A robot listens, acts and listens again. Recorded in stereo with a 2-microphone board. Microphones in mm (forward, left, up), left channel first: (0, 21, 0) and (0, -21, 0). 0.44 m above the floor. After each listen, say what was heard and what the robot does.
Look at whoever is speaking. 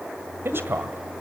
The man speaking: about 65° right or 115° right. Turn 65° right.
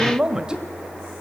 So it is at 20° right. Turn 20° right.
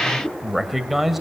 Found it: a man speaking, straight ahead, 1 to 2 m away.